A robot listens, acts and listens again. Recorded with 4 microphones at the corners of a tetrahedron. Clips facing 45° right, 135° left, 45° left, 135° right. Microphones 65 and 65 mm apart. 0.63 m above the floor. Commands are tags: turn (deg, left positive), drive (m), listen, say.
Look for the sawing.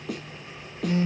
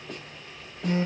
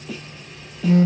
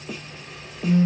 <listen/>
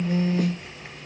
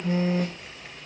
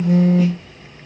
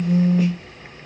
<listen/>
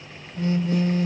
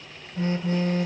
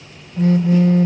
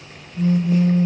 <say>I can't make out sawing, only a snare drum and a phone buzzing.</say>